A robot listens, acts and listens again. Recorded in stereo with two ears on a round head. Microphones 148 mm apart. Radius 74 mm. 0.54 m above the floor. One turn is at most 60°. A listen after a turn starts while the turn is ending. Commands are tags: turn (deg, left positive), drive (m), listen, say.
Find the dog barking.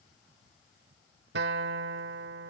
<listen/>
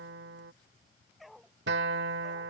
<turn deg="30"/>
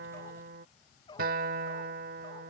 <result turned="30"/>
<turn deg="60"/>
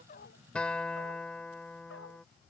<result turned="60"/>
<turn deg="60"/>
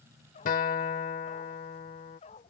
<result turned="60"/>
<turn deg="40"/>
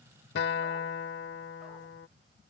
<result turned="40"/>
<listen/>
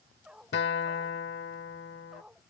<say>Found it: a dog barking, straight ahead.</say>